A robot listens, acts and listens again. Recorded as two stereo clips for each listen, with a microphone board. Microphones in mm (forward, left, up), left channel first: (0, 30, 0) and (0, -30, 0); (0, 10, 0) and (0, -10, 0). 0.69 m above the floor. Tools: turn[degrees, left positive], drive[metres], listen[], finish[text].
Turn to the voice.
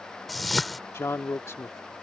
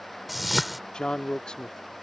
Thought: The man speaking: about 50° left or 130° left.
Action: turn[50]
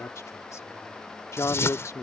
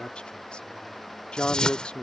Thought: So it is at 70° left.
Action: turn[70]
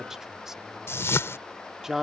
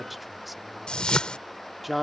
Thought: The man speaking is now 10° right.
Action: turn[-10]
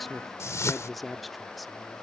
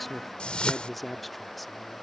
Action: finish[Found it: a man speaking, straight ahead.]